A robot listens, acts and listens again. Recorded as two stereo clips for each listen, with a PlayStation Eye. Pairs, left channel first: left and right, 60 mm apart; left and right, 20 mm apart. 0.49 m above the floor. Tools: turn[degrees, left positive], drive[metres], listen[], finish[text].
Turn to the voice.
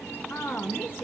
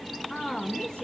Thought: The woman speaking: about 35° left or 145° left.
Action: turn[35]
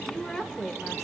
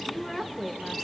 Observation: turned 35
Thought: So it is at 10° left.
Action: turn[10]
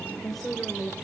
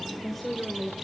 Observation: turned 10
Action: finish[Facing the woman speaking.]